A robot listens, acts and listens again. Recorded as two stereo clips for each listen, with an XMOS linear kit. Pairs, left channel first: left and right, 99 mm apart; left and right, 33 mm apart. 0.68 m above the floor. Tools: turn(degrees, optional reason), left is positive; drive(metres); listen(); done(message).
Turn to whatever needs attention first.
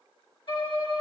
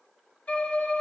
listen()
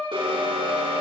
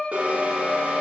turn(degrees=-60, reason="The alarm: about 60° right or 120° right.")
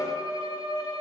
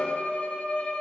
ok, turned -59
listen()
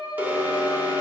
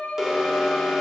turn(degrees=-20, reason="So it is at 20° right.")
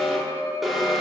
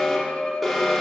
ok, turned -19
done("Facing the alarm.")